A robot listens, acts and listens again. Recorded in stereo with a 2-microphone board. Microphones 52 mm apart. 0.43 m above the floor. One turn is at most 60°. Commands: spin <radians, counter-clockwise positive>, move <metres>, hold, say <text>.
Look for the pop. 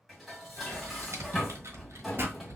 spin -0.87
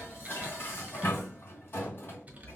hold
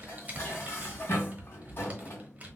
say I heard a pop, but can't make it out now. It was about straight ahead or 80° right.